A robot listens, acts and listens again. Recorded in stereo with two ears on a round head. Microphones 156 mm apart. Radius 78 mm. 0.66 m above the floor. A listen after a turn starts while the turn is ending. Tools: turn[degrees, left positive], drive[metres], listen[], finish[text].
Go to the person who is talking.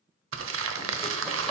Action: listen[]
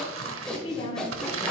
Thought: The woman speaking: about 35° left or 145° left.
Action: turn[35]
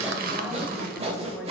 Action: listen[]
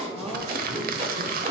Action: listen[]
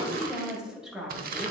Action: drive[1.0]
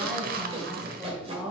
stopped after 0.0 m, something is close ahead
Action: finish[Something is in my way. I am facing the woman speaking but have not reached it.]